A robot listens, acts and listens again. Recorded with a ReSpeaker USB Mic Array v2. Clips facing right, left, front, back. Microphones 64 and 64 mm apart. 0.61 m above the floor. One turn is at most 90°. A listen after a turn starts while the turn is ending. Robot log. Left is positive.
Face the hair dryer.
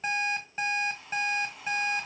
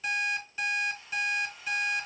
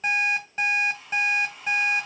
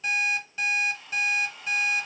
note: The hair dryer: 80° right.
cmd yaw -80
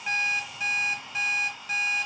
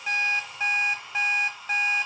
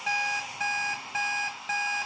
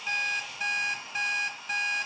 end: Facing the hair dryer.